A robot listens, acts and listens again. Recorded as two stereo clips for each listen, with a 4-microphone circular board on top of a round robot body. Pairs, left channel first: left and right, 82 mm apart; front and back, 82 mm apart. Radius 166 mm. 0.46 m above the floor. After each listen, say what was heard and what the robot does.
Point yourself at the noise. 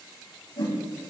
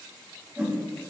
The whoosh: 105° left. Turn 105° left.
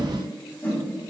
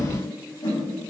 The whoosh is now 25° left. Turn 25° left.
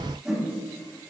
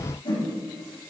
The whoosh is now 10° right. Turn 10° right.
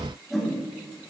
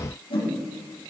Facing the whoosh.